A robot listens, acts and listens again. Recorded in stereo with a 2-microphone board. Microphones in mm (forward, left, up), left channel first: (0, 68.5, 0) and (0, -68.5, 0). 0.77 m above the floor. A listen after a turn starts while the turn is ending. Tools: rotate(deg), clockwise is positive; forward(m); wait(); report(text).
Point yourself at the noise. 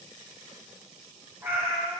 rotate(25)
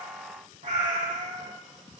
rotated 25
rotate(105)
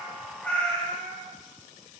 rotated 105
rotate(-15)
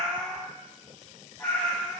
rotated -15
rotate(-10)
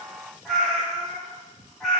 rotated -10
report("Found it: a cat meowing, straight ahead, 2 to 4 m away.")